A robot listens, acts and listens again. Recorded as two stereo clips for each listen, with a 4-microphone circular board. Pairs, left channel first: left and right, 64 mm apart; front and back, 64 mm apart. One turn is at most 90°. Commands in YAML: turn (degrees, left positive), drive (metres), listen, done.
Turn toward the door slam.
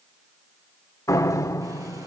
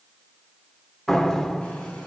turn: 85
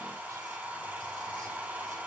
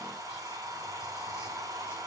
done: "Facing where the door slam came from. I can't hear it now."